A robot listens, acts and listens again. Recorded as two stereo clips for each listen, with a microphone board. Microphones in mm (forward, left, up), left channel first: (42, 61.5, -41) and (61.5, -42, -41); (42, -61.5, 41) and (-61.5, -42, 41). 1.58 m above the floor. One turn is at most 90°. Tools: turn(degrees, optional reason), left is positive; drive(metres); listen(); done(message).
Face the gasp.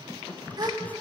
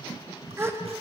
turn(degrees=-90, reason="The gasp: 125° right.")
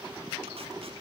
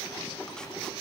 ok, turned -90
turn(degrees=-35, reason="Nothing new. It was at 35° right.")
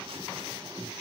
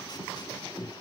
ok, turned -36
done("Facing where the gasp came from. I can't hear it now.")